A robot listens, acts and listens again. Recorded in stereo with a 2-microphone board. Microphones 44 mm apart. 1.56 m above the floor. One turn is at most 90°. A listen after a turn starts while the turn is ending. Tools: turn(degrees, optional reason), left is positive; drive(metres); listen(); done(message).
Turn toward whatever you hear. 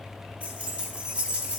turn(degrees=-35, reason="The keys jangling: about 35° right or 145° right.")
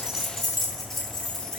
turn(degrees=15, reason="So it is at 15° left.")
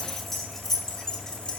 turn(degrees=20, reason="The keys jangling is now 20° left.")
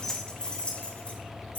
turn(degrees=40, reason="The keys jangling is now 40° left.")
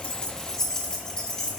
turn(degrees=20, reason="The keys jangling is now 20° left.")
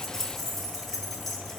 turn(degrees=10, reason="The keys jangling is now 10° left.")
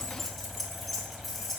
done("Found it: keys jangling, straight ahead.")